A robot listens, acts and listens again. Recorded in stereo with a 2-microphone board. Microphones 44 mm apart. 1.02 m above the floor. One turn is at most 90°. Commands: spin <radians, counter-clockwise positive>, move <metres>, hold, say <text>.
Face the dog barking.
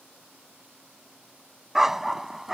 spin -0.52
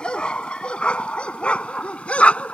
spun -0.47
spin 0.52
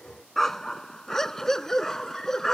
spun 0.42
spin 0.17
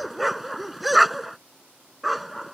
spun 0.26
say Facing the dog barking.